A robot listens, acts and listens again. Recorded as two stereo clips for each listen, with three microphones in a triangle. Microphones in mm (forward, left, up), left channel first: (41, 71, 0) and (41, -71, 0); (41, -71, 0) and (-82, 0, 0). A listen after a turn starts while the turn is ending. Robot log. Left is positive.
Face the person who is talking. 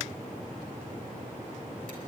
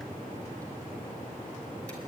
cmd idle
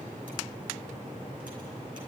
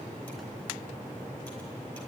cmd idle
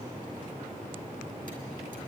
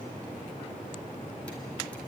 end: I can't make out anyone speaking.